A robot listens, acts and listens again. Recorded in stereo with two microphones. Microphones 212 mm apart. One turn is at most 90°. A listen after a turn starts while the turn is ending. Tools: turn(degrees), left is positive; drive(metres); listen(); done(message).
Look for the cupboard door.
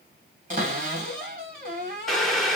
turn(degrees=-35)
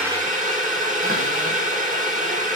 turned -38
listen()
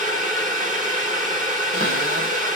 listen()
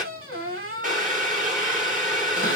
turn(degrees=-90)
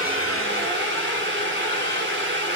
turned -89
turn(degrees=-15)
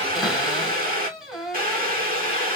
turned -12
done("Found it: a cupboard door, straight ahead, 2 to 4 m away.")